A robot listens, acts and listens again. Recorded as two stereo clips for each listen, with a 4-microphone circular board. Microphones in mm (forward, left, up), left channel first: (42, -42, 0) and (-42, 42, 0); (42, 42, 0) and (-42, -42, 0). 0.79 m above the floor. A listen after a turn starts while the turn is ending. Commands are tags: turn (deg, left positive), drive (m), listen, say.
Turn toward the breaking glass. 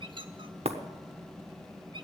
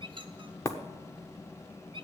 <turn deg="110"/>
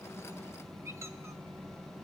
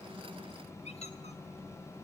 <say>Facing where the breaking glass came from. I can't hear it now.</say>